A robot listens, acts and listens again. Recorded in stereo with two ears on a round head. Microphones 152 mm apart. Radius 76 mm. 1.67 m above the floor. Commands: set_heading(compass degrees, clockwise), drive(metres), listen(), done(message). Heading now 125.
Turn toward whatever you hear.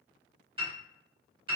set_heading(155)
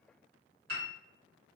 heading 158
set_heading(273)
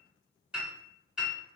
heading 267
done("Found it: a piano, straight ahead, 1 to 2 m away.")